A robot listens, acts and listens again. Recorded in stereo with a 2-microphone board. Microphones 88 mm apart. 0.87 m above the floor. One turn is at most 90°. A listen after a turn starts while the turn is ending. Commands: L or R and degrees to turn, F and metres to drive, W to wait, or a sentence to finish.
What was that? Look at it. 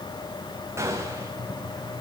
R30
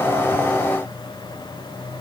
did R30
W
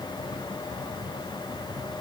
I heard a gunshot, but can't make it out now. It was about straight ahead or 120° right.